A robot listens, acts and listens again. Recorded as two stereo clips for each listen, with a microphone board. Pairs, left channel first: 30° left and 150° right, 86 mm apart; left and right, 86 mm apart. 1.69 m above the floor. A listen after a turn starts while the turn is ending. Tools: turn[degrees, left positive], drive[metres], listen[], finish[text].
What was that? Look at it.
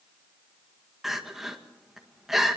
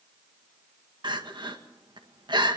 Thought: The crying: 65° right.
Action: turn[-65]
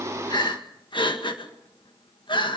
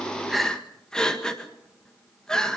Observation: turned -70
Action: finish[Facing the crying.]